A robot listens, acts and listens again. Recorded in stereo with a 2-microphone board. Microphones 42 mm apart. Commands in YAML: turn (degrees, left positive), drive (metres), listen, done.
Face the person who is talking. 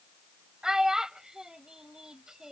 turn: -30
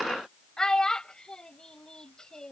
turn: 20
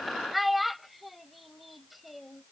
done: "Facing the child speaking."